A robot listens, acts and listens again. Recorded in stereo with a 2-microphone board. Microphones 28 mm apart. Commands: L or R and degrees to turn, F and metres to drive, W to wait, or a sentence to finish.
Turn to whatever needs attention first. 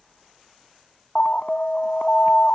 L55
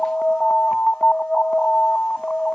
L65
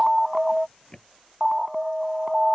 Facing the alarm.